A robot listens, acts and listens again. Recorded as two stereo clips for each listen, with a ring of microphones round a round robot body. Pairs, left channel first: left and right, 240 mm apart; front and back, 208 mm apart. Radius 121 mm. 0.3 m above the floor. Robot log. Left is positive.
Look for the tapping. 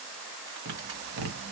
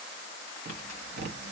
note: The tapping: 135° right.
cmd yaw -135
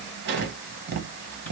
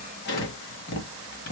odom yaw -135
note: The tapping is now 45° right.
cmd yaw -45
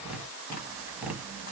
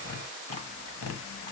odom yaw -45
end: Facing the tapping, under 1 m away.